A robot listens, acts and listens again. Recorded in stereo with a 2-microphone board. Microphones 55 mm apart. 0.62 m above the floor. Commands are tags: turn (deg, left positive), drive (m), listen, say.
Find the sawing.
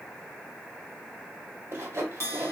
<turn deg="-50"/>
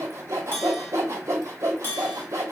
<turn deg="-75"/>
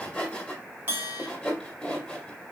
<turn deg="20"/>
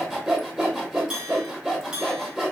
<say>Found it: sawing, straight ahead.</say>